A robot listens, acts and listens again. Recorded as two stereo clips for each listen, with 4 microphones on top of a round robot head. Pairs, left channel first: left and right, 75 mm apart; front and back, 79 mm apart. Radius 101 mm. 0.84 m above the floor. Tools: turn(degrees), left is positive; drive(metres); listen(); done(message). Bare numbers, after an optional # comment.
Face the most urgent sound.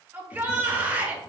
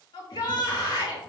# The shout: 25° right.
turn(-25)
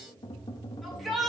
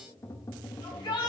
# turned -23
done("Facing the shout, 2 to 4 m away.")